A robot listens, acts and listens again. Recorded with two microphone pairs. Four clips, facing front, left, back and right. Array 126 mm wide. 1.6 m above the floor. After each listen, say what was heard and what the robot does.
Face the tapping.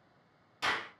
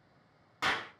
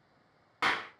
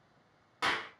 Keep listening.
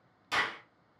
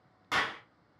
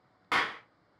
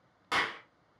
Keep listening.
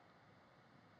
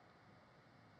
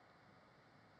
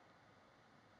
I can't make out tapping, only a clap.